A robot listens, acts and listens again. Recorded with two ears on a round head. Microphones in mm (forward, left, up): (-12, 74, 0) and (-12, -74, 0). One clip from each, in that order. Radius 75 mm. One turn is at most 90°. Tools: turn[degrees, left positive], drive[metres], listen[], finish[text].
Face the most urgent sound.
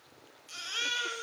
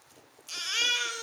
Thought: The baby crying: about 40° right or 140° right.
Action: turn[-40]
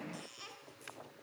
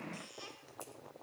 Action: finish[Found it: a baby crying, straight ahead.]